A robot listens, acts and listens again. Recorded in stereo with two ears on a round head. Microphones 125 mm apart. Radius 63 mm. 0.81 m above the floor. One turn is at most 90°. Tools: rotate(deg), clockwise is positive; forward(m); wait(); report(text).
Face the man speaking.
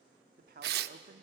rotate(70)
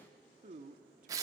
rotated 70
rotate(50)
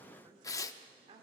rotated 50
rotate(40)
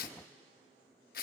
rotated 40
wait()
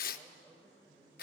rotate(10)
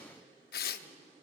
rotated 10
wait()
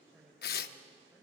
report("Found it: a man speaking, straight ahead.")